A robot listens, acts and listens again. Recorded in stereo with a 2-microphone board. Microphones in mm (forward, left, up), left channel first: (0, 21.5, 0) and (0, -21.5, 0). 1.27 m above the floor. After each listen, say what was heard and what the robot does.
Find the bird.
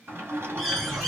Turn 30° left.
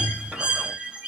So it is at 25° right. Turn 25° right.
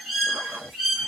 Facing the bird.